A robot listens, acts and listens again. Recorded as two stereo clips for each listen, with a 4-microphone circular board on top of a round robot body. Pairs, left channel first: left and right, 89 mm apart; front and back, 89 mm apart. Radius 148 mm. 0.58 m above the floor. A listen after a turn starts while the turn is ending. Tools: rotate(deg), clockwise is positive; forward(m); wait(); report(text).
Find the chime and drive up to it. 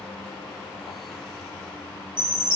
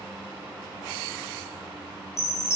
rotate(60)
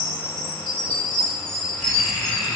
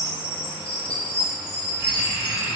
forward(1.0)
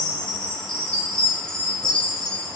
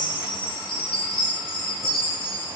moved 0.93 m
rotate(-10)
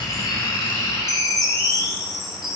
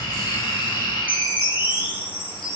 forward(1.0)
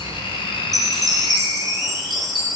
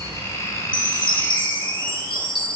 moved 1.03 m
forward(1.0)
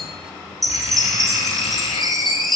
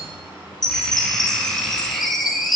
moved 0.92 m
forward(1.0)
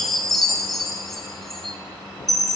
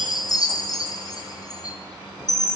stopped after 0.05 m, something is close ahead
report("Arrived at the chime, straight ahead.")